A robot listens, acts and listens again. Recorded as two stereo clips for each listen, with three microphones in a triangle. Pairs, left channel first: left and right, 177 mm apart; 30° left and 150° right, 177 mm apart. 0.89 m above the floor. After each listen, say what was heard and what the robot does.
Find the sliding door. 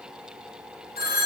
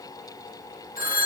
Keep listening.
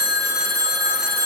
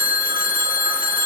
Keep listening.
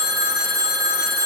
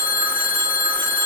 I can't make out a sliding door, only a phone ringing.